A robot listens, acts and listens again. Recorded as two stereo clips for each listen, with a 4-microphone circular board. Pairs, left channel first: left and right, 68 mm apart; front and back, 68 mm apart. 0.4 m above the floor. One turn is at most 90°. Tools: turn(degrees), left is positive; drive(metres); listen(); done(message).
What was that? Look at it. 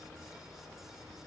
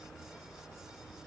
listen()
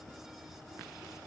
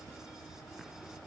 listen()
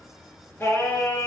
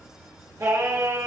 turn(degrees=90)
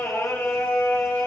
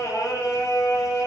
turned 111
turn(degrees=35)
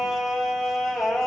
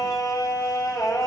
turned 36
done("Facing the singing.")